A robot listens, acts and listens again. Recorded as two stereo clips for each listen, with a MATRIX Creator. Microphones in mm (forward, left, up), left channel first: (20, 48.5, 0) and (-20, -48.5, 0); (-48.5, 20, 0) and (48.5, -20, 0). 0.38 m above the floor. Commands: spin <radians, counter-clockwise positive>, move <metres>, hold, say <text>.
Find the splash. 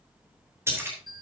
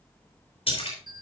spin -3.05
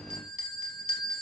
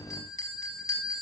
say Facing where the splash came from. I can't hear it now.